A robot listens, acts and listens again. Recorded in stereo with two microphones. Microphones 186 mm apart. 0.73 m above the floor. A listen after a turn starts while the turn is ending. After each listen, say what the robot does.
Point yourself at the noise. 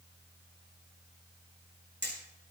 Turn 90° right.
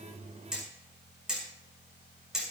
Found it: hammering, straight ahead.